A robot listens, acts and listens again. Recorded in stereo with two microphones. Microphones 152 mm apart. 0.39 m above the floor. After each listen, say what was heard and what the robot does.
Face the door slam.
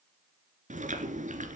Keep listening.
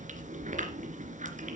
Keep listening.
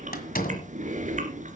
The door slam: about 70° left or 110° left. Turn 70° left.
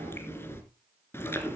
Keep listening.
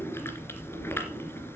I heard a door slam, but can't make it out now. It was about straight ahead or 40° left.